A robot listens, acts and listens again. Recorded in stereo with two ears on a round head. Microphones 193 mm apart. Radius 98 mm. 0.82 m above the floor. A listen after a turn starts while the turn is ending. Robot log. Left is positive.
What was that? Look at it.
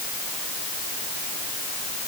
cmd idle
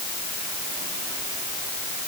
cmd idle
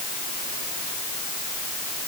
end: I can't make out anything.